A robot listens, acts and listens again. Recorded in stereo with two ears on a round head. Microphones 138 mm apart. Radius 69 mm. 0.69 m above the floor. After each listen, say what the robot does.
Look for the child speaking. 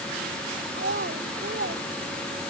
Turn 65° right.
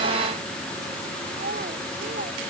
Turn 50° right.
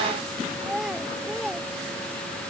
Found it: a child speaking, straight ahead.